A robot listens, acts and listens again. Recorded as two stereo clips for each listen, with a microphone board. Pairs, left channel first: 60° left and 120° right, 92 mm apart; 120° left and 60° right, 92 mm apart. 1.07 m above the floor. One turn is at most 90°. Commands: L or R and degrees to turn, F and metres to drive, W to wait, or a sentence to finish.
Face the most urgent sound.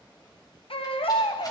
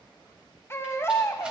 L60
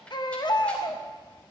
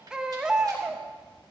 L25
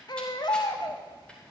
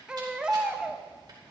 L20
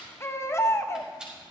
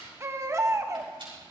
Facing the baby crying.